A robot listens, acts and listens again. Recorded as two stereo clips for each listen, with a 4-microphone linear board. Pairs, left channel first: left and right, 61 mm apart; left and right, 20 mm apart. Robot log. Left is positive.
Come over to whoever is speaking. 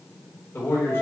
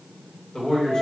note: The man speaking: about 40° left or 140° left.
cmd yaw +40
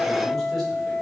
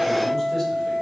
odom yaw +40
cmd idle
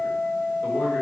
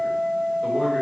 cmd idle
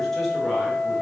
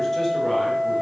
end: I heard a man speaking, but can't make it out now. It was about straight ahead or 100° left. I did not reach it.